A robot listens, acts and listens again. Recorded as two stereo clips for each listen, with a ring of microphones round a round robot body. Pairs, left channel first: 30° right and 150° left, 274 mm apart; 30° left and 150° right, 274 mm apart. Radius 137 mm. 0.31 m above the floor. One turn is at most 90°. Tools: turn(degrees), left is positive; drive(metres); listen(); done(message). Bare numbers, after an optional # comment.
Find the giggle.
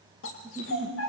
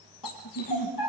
# The giggle: 70° left.
turn(70)
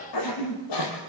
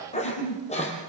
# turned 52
# The giggle is now 15° left.
turn(15)
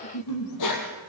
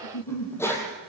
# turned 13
done("Facing the giggle, over 4 m away.")